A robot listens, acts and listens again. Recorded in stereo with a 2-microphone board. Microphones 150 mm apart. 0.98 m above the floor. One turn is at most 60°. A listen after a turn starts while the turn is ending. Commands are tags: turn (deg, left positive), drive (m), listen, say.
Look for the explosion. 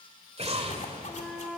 <turn deg="-45"/>
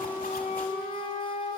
<listen/>
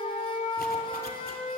<say>I heard an explosion, but can't make it out now. It was about straight ahead or 90° right.</say>